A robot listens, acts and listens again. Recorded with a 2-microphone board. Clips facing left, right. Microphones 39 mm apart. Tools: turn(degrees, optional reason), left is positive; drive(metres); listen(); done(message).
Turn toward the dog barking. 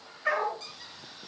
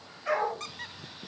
turn(degrees=70, reason="The dog barking: about 70° left or 110° left.")
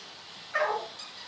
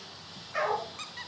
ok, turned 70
turn(degrees=40, reason="So it is at 40° left.")
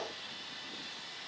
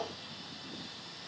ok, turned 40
listen()
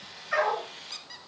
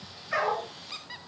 turn(degrees=15, reason="The dog barking is now 15° left.")
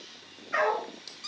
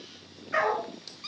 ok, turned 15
done("Found it: a dog barking, straight ahead, over 4 m away.")